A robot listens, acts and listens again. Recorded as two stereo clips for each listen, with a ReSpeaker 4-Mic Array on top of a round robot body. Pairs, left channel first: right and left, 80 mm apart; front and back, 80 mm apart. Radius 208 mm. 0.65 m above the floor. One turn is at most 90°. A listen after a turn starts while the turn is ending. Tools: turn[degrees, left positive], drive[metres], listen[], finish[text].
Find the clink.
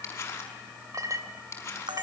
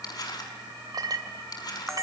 Thought: The clink: 140° left.
Action: turn[90]
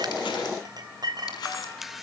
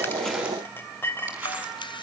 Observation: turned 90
Thought: The clink is now 60° left.
Action: turn[60]
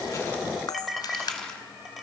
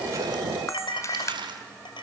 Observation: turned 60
Action: finish[Found it: a clink, straight ahead, 2 to 4 m away.]